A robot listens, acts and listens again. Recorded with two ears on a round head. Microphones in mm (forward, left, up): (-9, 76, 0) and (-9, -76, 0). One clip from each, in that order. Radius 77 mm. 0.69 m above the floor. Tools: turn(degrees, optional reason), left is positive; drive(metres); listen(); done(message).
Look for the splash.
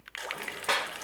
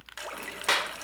turn(degrees=-40, reason="The splash: about 40° right or 140° right.")
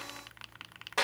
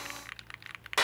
listen()
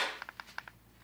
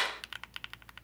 done("I heard a splash, but can't make it out now. It was about straight ahead or 100° right.")